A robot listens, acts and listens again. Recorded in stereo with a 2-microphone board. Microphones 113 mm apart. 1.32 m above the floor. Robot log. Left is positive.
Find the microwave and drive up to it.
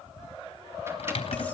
cmd idle
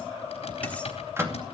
note: The microwave: about 20° right or 160° right.
cmd yaw -20
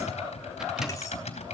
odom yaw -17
cmd idle
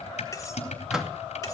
cmd fwd 1.0
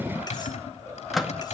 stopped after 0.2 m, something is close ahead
end: Something is in my way. I am facing the microwave but have not reached it.